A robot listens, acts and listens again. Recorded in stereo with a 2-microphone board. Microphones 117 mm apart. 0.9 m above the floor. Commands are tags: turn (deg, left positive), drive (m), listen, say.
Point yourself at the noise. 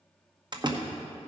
<turn deg="-40"/>
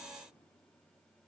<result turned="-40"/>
<listen/>
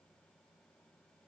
<say>I heard a door slam, but can't make it out now. It was about straight ahead or 100° right.</say>